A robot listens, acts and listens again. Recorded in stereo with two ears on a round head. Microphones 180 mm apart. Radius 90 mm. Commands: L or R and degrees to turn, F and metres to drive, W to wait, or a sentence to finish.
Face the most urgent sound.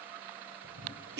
W
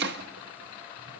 W
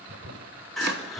L30
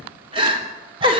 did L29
R25
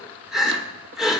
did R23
Facing the crying, 2 to 4 m away.